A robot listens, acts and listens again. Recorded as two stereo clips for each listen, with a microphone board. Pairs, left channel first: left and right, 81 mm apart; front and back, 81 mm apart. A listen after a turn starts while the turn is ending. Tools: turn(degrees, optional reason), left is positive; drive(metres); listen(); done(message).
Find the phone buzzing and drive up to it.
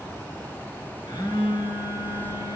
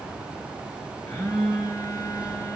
turn(degrees=50, reason="The phone buzzing: 50° left.")
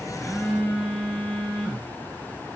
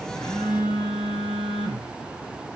drive(metres=1.0)
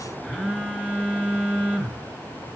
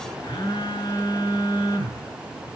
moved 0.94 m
turn(degrees=-15, reason="The phone buzzing is now 15° right.")
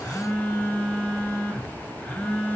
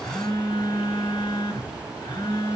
drive(metres=1.0)
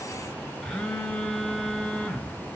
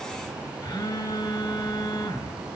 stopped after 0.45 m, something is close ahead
done("I am next to the phone buzzing.")